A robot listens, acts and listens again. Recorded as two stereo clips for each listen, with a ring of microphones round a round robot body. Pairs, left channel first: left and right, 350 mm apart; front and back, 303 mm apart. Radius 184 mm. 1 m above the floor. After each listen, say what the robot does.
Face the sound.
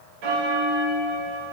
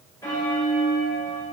Turn 85° right.
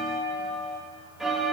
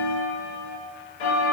Found it: a bell, straight ahead.